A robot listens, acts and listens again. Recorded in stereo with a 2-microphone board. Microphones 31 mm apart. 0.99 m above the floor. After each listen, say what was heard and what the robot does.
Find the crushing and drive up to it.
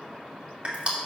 The crushing: about 40° right or 140° right. Turn 40° right.
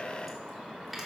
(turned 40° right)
Keep listening.
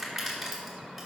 Drive 1.0 m forward.
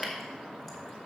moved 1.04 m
Keep listening.
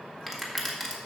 Drive 1.0 m forward.
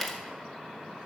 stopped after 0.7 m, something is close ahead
I am next to the crushing.